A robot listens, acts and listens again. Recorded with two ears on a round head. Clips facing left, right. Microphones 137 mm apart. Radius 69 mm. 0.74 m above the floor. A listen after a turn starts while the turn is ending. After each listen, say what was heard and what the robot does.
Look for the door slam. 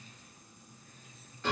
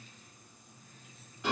Keep listening.
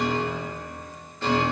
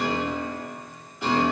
Keep listening.
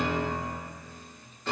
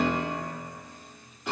I can't make out a door slam, only a piano.